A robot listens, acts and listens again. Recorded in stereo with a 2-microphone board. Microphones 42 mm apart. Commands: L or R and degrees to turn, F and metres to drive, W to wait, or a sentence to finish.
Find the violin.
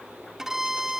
R30
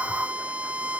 R135
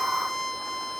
Facing the violin.